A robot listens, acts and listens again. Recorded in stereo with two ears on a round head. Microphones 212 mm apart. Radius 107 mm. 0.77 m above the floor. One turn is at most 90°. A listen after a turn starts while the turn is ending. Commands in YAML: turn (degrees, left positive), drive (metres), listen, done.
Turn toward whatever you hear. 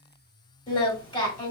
turn: 20
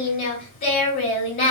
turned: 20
turn: 90
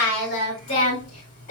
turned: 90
turn: 35
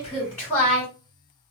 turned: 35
done: "Found it: singing, straight ahead, 2 to 4 m away."